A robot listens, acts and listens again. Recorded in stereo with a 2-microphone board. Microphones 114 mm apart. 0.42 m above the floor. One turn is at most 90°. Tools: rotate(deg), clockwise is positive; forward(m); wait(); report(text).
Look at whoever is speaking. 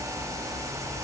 wait()
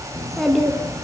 rotate(-30)
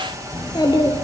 rotate(-90)
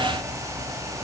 rotate(-50)
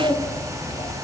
rotate(-40)
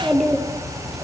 report("Found it: a child speaking, straight ahead, over 4 m away.")